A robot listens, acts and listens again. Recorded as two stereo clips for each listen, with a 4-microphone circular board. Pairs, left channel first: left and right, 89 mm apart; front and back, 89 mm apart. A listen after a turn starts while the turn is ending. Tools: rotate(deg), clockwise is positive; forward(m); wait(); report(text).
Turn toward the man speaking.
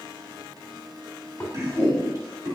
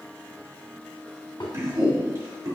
rotate(140)
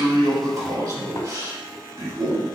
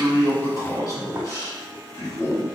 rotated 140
rotate(55)
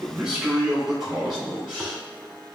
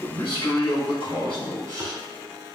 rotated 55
rotate(10)
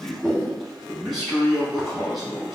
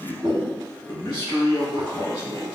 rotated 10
report("Found it: a man speaking, straight ahead.")